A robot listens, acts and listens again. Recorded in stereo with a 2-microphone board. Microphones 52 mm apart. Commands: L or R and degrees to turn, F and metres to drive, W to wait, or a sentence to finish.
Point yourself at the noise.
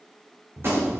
R55
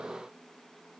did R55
W
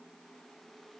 I heard a gunshot, but can't make it out now. It was about straight ahead or 70° right.